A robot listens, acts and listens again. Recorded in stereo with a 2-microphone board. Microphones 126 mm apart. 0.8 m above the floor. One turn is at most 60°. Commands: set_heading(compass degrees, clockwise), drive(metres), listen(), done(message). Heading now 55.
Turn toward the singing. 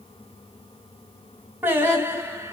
set_heading(75)
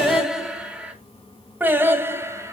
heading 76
set_heading(96)
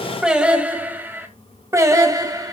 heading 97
set_heading(122)
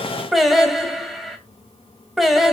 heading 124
done("Found it: singing, straight ahead, 1 to 2 m away.")